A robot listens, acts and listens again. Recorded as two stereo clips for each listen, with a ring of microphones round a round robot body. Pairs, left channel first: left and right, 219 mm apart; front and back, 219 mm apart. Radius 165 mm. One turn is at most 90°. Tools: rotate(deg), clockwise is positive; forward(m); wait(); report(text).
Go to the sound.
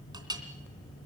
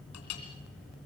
rotate(20)
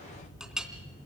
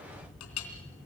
forward(1.0)
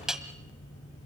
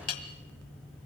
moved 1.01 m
forward(1.0)
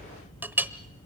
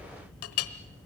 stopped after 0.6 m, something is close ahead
rotate(10)
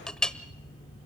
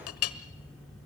report("I am next to the clink.")